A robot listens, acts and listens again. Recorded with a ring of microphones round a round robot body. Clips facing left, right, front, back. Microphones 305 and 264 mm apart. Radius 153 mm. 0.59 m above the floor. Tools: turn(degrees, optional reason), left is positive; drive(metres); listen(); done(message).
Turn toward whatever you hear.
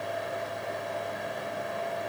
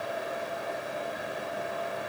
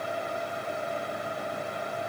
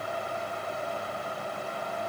listen()
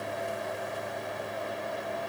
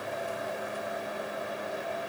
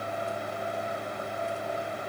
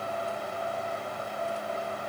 listen()
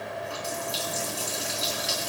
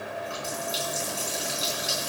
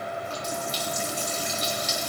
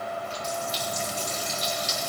done("Facing the running tap, over 4 m away.")